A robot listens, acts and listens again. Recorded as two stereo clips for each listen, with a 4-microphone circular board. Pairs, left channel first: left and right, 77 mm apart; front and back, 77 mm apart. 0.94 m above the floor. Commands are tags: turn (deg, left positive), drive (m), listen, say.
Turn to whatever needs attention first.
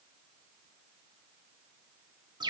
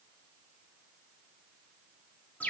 <listen/>
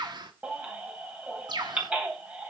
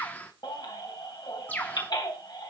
<turn deg="-20"/>
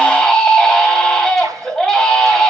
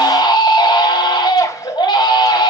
<say>Facing the baby crying, 2 to 4 m away.</say>